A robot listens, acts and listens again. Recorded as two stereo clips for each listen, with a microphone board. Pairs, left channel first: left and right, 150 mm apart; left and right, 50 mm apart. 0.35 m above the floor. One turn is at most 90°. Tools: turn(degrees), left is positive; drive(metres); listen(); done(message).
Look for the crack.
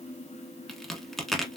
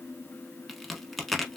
turn(degrees=30)
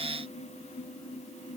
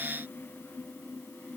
listen()
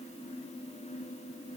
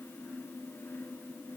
done("I heard a crack, but can't make it out now. It was about 30° right or 150° left.")